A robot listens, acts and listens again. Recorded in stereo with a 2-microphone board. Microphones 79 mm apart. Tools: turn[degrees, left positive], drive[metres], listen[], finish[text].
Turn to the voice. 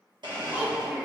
Thought: The child speaking: about 20° right or 160° right.
Action: turn[-20]
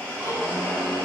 Action: listen[]
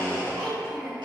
Thought: So it is at 140° right.
Action: turn[-140]
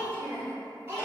Thought: The child speaking is now 30° right.
Action: turn[-30]
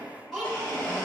Action: finish[Found it: a child speaking, straight ahead, 2 to 4 m away.]